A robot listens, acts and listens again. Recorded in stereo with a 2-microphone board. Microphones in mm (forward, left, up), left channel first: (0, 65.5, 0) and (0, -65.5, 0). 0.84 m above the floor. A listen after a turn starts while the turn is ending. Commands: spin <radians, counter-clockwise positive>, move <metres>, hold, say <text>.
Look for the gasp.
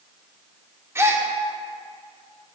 spin -0.35
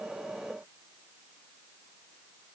hold
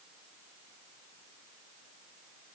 say I heard a gasp, but can't make it out now. It was about straight ahead or 140° right.